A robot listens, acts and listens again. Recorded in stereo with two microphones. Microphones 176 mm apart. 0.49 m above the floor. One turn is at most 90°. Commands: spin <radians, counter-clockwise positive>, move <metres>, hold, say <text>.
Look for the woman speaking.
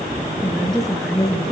spin 0.52
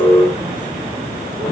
hold
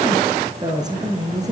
spin -0.35
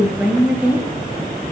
say Found it: a woman speaking, straight ahead.